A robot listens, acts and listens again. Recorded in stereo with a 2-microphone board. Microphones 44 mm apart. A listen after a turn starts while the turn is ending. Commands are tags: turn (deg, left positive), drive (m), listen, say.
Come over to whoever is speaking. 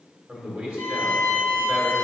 <turn deg="-25"/>
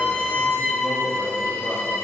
<listen/>
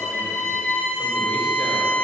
<listen/>
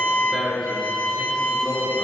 <drive m="1.0"/>
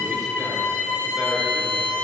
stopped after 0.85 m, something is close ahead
<listen/>
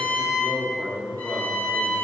<say>Arrived at the man speaking, straight ahead.</say>